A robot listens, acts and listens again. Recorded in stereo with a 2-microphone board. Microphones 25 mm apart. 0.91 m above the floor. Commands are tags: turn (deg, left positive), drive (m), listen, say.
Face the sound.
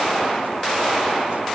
<listen/>
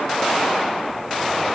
<listen/>
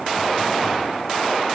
<say>I can't make out anything to turn to.</say>